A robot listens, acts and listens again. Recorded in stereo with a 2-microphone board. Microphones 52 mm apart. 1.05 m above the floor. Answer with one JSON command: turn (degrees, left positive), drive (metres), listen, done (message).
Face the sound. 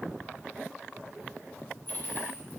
{"turn": 40}
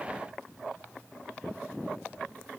{"listen": true}
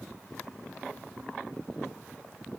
{"done": "I heard a dropped coin, but can't make it out now. It was about straight ahead or 100° left."}